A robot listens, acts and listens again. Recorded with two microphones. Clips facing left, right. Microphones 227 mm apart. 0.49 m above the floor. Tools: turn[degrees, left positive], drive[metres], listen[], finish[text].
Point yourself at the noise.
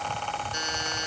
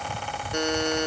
Thought: The buzzer: about 65° right or 115° right.
Action: turn[-65]
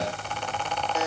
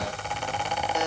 Action: listen[]
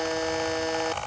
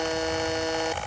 Action: finish[Found it: a buzzer, straight ahead.]